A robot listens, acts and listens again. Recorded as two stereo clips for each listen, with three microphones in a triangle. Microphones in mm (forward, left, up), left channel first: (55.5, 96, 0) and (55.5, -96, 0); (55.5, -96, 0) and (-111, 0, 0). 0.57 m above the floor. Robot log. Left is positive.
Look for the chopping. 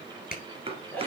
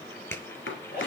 note: The chopping: 30° right.
cmd yaw -30
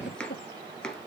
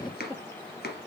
end: Facing the chopping.